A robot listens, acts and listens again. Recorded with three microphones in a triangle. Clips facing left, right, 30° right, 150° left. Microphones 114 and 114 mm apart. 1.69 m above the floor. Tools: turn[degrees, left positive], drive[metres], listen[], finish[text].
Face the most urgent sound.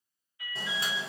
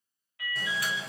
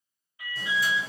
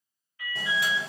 Thought: The alarm: 105° right.
Action: turn[-105]
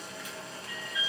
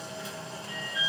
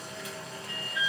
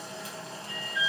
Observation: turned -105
Thought: The alarm is now 45° right.
Action: turn[-45]
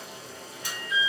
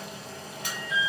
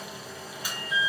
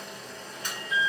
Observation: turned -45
Action: finish[Found it: an alarm, straight ahead, 1 to 2 m away.]